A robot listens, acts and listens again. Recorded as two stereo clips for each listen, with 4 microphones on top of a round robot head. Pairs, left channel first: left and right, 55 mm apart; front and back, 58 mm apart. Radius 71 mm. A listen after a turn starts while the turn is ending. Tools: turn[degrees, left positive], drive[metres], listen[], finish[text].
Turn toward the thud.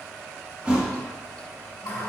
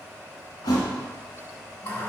Thought: The thud: 15° right.
Action: turn[-15]
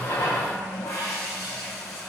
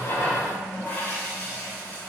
Action: finish[Facing where the thud came from. I can't hear it now.]